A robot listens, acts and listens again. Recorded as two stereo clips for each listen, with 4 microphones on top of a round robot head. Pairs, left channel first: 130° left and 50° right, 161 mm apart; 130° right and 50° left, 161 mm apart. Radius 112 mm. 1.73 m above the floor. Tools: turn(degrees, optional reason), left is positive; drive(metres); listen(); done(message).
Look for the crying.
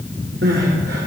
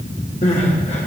turn(degrees=-80, reason="The crying: 80° right.")
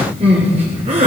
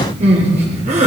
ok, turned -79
done("Facing the crying.")